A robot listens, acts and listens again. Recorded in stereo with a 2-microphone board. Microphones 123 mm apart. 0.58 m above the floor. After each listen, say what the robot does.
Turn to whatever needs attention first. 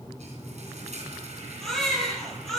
Turn 30° left.
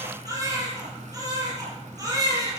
Turn 30° right.
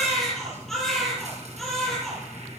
Found it: a baby crying, straight ahead.